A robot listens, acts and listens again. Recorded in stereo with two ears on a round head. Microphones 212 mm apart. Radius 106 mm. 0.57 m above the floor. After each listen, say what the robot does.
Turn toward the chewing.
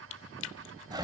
Turn 55° left.
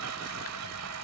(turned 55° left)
Keep listening.
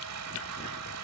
Keep listening.
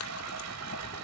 I heard chewing, but can't make it out now. It was about straight ahead or 70° left.